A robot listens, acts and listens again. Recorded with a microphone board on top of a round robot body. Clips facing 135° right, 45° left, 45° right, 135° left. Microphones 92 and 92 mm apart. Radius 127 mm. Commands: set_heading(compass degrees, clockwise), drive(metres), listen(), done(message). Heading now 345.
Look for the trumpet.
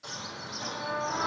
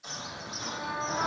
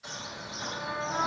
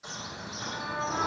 set_heading(105)
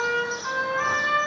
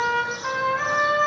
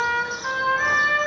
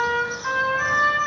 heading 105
done("Facing the trumpet, over 4 m away.")